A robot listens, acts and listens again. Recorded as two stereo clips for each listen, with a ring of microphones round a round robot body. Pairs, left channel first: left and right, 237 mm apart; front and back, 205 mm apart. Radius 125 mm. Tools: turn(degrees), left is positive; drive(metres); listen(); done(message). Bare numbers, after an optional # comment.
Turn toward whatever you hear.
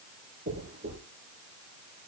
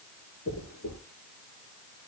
# The dropped coin: 30° right.
turn(-30)
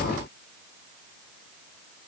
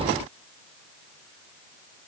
done("I heard a dropped coin from this way, but can't make it out now.")